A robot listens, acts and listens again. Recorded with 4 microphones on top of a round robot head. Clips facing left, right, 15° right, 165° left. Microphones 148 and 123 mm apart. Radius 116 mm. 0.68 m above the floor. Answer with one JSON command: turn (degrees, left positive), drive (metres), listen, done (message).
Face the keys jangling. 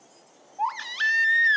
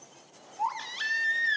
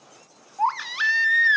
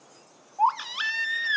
{"listen": true}
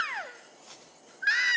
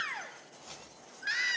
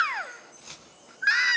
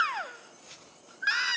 {"done": "Facing the keys jangling, over 4 m away."}